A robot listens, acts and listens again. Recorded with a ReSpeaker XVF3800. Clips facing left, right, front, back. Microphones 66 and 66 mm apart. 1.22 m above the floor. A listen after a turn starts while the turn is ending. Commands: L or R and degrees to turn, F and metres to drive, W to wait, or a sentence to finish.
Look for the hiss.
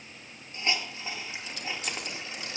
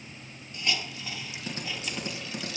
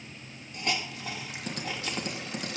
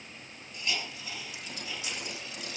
L30
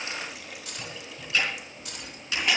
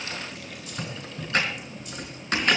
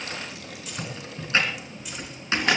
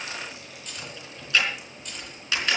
W
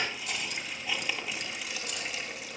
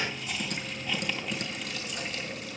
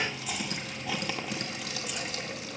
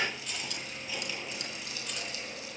Found it: a hiss, straight ahead, 2 to 4 m away.